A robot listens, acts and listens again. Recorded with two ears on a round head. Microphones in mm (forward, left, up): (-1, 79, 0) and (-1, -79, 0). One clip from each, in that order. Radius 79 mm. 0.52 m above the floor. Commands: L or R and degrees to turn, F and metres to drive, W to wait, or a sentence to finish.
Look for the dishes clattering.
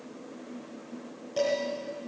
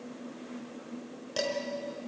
R50
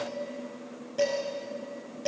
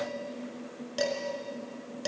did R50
R80
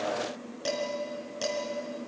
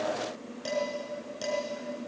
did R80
L10
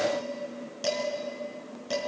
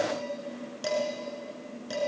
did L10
Found it: dishes clattering, straight ahead, over 4 m away.